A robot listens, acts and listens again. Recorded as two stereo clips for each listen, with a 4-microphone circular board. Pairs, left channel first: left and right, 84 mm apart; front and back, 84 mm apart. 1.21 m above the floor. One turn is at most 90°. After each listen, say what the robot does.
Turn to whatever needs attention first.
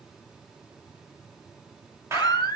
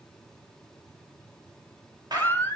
Turn 60° left.
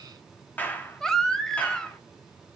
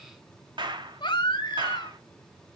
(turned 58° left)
Facing the baby crying, 2 to 4 m away.